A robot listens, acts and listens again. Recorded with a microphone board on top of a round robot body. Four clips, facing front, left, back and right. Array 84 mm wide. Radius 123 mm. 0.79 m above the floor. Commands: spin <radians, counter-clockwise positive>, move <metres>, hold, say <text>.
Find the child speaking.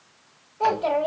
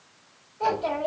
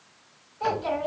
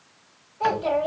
say Found it: a child speaking, straight ahead, 2 to 4 m away.